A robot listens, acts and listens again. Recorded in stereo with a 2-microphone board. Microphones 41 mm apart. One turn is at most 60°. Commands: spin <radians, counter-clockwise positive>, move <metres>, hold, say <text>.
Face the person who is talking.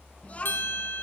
spin 0.61
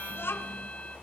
spin 1.05
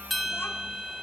spin 0.87
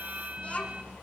spin 0.61
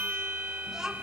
spin -0.26
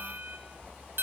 hold
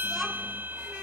hold
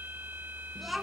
say Facing the child speaking.